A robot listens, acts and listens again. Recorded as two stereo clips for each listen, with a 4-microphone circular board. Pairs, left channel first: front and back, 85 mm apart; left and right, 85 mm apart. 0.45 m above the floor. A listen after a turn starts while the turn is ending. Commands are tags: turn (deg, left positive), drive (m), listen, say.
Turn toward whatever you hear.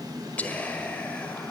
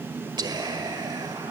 <turn deg="-70"/>
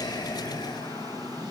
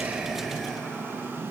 <listen/>
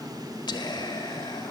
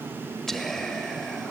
<say>Found it: whispering, straight ahead.</say>